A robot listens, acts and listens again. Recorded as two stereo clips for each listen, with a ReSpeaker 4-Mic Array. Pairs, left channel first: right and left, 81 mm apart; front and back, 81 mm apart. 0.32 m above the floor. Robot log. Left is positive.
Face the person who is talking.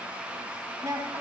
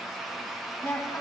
note: The woman speaking: 55° left.
cmd yaw +55
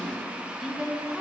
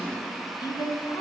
end: Found it: a woman speaking, straight ahead, 1 to 2 m away.